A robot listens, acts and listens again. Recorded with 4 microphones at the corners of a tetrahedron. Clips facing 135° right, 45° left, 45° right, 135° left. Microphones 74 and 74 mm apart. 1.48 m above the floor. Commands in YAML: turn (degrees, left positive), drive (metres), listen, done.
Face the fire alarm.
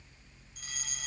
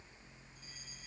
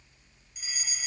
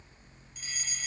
turn: -125
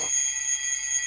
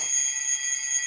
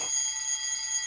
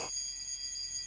turn: -45
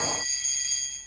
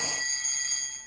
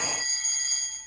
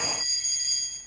turn: -10
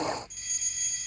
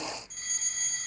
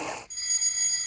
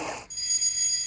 done: "Facing the fire alarm."